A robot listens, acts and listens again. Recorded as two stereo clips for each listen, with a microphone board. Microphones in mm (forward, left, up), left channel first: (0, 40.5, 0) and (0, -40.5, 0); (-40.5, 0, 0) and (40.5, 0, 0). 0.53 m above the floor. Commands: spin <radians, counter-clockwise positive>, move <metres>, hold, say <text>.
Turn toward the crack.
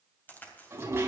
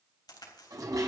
spin 2.71
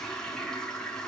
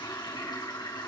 say I heard a crack from this way, but can't make it out now.